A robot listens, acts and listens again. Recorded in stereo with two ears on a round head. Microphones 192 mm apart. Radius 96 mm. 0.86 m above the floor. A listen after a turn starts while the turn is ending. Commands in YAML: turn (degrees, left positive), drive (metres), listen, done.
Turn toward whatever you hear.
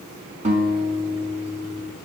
turn: -35
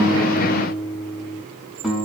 done: "Found it: a guitar, straight ahead, over 4 m away."